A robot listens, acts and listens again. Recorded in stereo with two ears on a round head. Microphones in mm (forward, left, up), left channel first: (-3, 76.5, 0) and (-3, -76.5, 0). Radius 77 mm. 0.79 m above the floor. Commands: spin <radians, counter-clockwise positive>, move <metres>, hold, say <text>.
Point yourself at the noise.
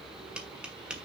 spin -0.52
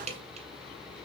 spin -2.44
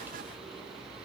hold
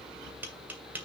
spin -0.17
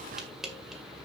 say Found it: tapping, straight ahead.